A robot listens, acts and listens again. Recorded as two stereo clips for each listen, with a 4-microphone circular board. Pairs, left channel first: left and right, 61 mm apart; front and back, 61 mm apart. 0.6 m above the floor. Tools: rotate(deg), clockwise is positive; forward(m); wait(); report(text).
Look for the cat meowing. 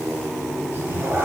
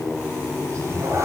rotate(145)
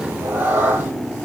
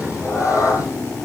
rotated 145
rotate(25)
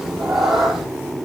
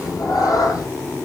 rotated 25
report("Facing the cat meowing.")